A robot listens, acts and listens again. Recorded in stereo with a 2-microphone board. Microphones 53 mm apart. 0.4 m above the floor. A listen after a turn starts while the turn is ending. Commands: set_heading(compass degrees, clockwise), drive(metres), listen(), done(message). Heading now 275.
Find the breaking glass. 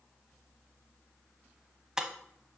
set_heading(305)
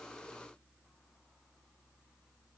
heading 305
listen()
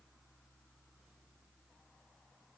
done("I heard breaking glass, but can't make it out now. It was about 15° left or 135° right.")